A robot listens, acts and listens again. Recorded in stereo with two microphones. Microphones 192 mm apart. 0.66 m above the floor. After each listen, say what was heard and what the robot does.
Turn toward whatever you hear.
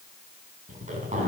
The zipper: about 40° right or 140° right. Turn 40° right.
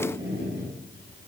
So it is at 100° right. Turn 100° right.
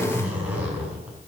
The zipper is now 10° right. Turn 10° right.
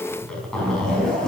Facing the zipper.